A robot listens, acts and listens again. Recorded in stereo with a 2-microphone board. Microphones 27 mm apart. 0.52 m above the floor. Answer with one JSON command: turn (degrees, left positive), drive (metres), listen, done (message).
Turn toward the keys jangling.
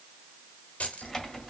{"turn": 70}
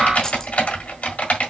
{"listen": true}
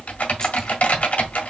{"listen": true}
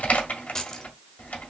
{"turn": 25}
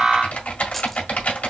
{"listen": true}
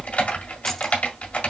{"listen": true}
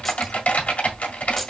{"done": "I heard keys jangling from this way, but can't make it out now."}